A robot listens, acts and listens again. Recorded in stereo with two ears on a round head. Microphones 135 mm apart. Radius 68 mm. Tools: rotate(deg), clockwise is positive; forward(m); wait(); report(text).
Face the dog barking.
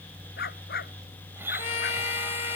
rotate(-75)
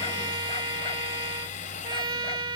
wait()
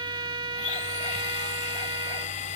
wait()
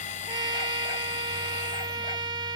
report("I heard a dog barking, but can't make it out now. It was about straight ahead or 30° left.")